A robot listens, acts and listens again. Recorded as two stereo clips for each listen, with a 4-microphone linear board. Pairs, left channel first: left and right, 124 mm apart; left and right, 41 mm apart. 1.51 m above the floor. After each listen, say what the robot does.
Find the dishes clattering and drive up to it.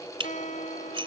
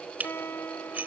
Turn 45° right.
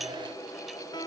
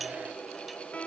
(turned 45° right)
Keep listening.
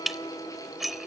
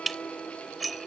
Drive 1.0 m forward.
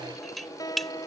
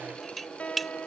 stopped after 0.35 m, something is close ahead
Something is in my way. I am facing the dishes clattering but have not reached it.